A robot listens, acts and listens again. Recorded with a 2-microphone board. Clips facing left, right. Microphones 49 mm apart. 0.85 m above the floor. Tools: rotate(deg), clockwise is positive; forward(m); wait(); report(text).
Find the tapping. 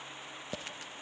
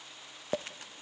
rotate(40)
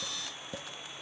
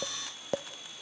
rotate(95)
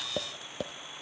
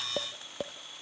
report("Facing the tapping, under 1 m away.")